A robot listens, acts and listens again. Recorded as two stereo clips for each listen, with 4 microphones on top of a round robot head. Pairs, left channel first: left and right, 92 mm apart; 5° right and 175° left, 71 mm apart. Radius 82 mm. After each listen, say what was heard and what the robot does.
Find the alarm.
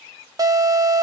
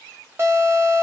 The alarm: 130° right. Turn 130° right.
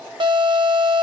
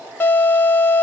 The alarm is now 65° right. Turn 65° right.
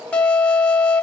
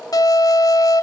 The alarm is now 15° left. Turn 15° left.
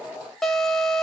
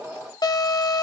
Found it: an alarm, straight ahead, under 1 m away.